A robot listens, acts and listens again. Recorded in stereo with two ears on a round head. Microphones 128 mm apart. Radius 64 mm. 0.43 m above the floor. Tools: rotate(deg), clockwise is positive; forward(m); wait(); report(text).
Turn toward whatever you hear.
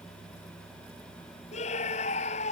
rotate(-50)
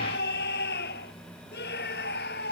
rotate(-80)
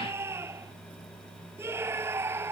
rotate(15)
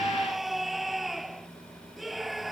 report("Found it: a scream, straight ahead.")